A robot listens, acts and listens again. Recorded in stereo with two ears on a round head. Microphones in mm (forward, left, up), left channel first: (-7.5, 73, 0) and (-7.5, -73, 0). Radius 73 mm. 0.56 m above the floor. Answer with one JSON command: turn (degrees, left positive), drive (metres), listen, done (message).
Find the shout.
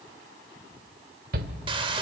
{"turn": -65}
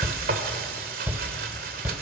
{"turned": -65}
{"turn": -15}
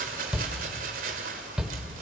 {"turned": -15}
{"done": "Found it: a shout, straight ahead, 1 to 2 m away."}